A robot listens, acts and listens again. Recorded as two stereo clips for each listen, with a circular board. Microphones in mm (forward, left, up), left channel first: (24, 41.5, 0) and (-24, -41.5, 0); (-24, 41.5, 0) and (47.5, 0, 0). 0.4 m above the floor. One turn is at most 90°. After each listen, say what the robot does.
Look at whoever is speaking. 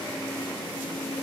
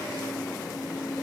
Keep listening.
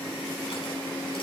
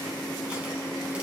Keep listening.
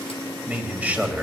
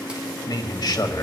Turn 90° left.
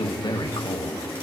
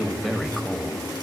Turn 60° left.
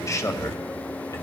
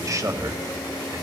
Turn 10° left.
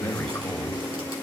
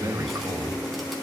Found it: a man speaking, straight ahead.